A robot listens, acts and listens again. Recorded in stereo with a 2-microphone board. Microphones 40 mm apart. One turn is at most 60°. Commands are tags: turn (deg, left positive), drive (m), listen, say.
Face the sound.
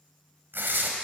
<turn deg="-60"/>
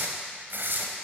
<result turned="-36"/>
<turn deg="-60"/>
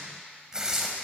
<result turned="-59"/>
<turn deg="-15"/>
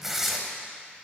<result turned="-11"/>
<say>Found it: tearing paper, straight ahead.</say>